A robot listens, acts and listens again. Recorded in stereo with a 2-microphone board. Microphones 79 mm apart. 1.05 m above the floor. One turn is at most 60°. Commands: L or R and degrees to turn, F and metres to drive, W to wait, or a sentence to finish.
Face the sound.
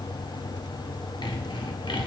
L60
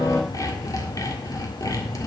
L45
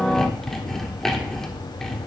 Facing the sawing.